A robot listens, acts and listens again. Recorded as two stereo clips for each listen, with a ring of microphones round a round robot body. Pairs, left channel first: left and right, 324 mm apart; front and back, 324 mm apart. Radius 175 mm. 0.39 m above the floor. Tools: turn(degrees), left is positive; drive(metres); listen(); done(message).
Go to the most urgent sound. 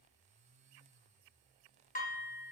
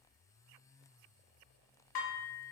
listen()
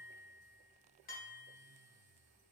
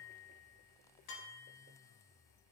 listen()
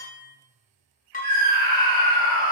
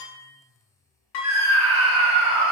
turn(degrees=-150)
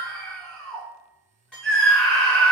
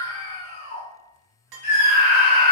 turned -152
drive(metres=1.0)
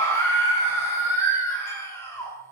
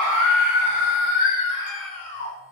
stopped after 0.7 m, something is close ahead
turn(degrees=10)
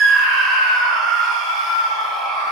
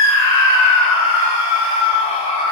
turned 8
done("Arrived at the scream, straight ahead.")